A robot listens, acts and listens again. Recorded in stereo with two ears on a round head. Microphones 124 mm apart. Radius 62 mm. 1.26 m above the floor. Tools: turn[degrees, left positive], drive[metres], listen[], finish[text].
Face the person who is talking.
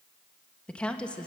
Action: turn[30]
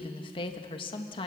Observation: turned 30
Thought: So it is at 140° left.
Action: turn[140]
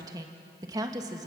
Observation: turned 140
Thought: The woman speaking is now 25° right.
Action: turn[-25]
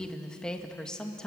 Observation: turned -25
Action: finish[Found it: a woman speaking, straight ahead.]